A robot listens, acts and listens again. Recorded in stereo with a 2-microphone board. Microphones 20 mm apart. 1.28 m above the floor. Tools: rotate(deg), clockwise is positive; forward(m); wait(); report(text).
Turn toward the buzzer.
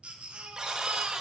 rotate(30)
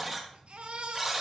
report("Facing the buzzer.")